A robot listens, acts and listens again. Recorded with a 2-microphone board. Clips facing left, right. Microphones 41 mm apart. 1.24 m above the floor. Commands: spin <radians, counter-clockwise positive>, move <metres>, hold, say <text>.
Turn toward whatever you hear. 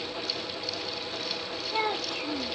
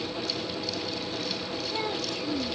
spin 0.44
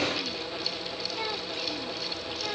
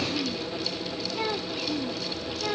spin -0.17
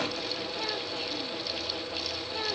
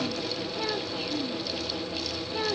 spin -0.17
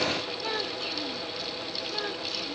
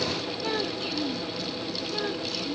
say Found it: a child speaking, straight ahead.